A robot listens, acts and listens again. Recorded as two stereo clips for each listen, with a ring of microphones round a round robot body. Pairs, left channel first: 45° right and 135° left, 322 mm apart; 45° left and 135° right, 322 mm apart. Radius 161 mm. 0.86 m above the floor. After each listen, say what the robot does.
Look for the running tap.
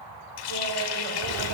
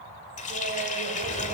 Turn 25° right.
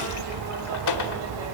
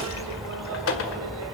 Facing the running tap, 1 to 2 m away.